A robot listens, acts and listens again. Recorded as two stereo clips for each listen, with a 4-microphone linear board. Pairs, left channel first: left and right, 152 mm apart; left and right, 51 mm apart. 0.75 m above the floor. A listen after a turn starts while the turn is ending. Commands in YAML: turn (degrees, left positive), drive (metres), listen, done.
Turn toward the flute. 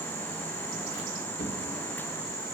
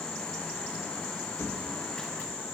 listen: true
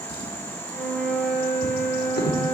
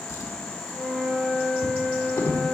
turn: 30
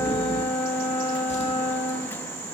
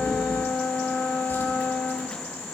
turn: 140
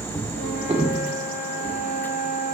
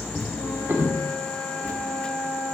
turn: 55
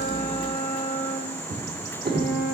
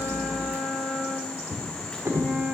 turn: 15
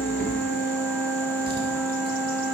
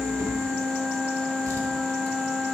done: "Facing the flute."